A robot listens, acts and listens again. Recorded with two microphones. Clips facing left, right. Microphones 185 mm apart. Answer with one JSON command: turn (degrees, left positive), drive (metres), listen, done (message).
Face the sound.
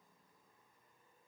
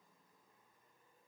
{"listen": true}
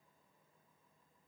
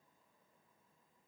{"listen": true}
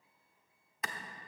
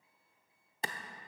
{"turn": -30}
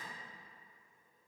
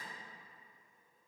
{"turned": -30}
{"listen": true}
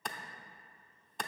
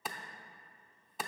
{"done": "Facing the clap."}